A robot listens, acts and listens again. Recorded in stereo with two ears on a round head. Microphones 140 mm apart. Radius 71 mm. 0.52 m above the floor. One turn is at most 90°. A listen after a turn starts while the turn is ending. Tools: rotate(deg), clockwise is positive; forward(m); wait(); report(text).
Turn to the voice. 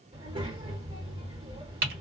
rotate(35)
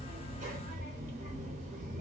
rotate(90)
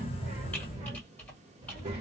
rotate(40)
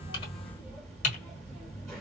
report("Facing the child speaking, 1 to 2 m away.")